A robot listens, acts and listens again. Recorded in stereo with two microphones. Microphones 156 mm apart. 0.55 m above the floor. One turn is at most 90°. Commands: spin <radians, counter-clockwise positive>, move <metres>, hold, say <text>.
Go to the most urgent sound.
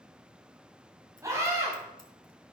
spin -0.35
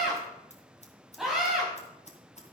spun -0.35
move 1.0
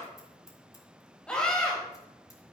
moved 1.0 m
move 1.0
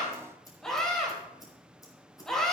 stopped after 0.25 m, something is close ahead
say Something is in my way. I am facing the scream but have not reached it.